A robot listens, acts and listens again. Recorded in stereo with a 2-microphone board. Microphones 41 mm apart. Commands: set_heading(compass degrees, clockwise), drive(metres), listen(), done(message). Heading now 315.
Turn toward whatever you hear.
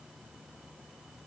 listen()
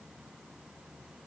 listen()
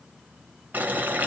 set_heading(5)
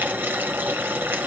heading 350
set_heading(70)
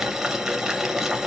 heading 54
set_heading(69)
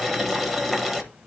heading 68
done("Found it: boiling, straight ahead, 1 to 2 m away.")